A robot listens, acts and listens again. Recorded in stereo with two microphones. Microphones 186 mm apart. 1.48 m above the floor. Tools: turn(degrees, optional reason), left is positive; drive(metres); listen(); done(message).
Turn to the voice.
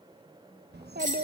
turn(degrees=-65, reason="The child speaking: about 65° right or 115° right.")
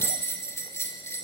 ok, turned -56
listen()
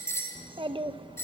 turn(degrees=-30, reason="So it is at 30° right.")
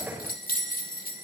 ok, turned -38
listen()
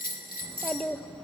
done("Found it: a child speaking, straight ahead.")